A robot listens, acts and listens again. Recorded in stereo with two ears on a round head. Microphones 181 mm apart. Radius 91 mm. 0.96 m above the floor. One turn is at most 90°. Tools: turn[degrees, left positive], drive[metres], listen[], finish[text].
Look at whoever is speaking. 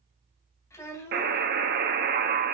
Action: turn[30]
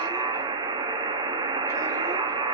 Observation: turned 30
Action: listen[]
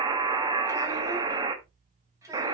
Thought: So it is at 15° right.
Action: turn[-15]
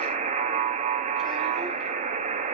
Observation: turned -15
Action: listen[]
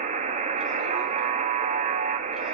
Action: listen[]
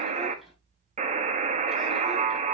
Action: finish[Facing where the child speaking came from. I can't hear it now.]